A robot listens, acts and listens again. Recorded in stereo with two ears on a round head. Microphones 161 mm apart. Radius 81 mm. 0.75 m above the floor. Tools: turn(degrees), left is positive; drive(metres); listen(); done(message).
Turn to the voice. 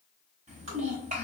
turn(degrees=-40)
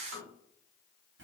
turn(degrees=-95)
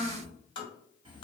turn(degrees=-30)
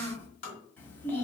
turn(degrees=10)
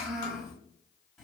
done("Found it: a child speaking, straight ahead.")